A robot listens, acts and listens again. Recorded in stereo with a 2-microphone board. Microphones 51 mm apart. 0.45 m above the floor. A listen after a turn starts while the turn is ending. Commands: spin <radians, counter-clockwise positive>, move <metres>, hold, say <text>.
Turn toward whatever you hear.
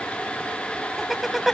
spin -0.52
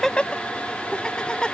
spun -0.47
spin 0.26
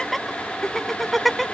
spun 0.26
say Facing the laughter.